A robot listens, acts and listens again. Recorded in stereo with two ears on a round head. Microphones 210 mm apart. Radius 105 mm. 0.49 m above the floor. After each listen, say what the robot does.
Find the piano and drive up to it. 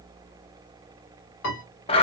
Turn 60° left.
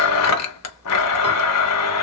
Keep listening.
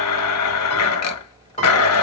Turn 35° left.
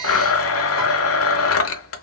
Keep listening.
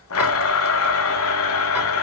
Keep listening.
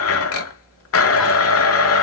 I heard a piano from this way, but can't make it out now. I did not reach it.